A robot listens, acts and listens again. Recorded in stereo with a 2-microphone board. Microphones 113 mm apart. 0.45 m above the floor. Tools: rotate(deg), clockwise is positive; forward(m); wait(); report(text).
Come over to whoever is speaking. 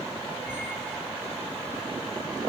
wait()
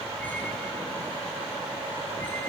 wait()
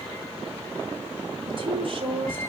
rotate(55)
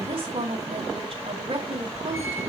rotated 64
rotate(55)
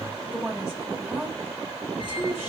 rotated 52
forward(1.0)
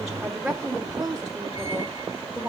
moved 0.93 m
forward(1.0)
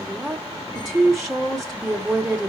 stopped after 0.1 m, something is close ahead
report("I am next to the woman speaking.")